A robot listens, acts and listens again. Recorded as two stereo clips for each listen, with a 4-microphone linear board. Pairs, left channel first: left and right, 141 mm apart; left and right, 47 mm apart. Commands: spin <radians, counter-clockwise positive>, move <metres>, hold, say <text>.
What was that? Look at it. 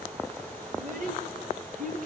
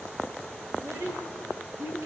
spin -1.31
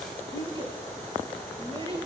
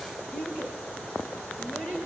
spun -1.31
spin -0.70
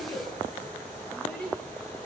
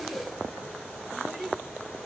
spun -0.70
say Found it: a child speaking, straight ahead, over 4 m away.